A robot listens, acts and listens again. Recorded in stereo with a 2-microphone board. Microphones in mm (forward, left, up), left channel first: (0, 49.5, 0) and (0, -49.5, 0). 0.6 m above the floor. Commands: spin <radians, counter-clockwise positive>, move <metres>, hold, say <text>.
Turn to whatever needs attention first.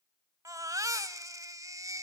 spin -0.61
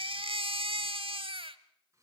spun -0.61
spin -1.83
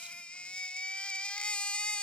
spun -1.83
spin 0.17
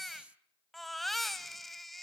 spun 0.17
say Found it: a baby crying, straight ahead, 1 to 2 m away.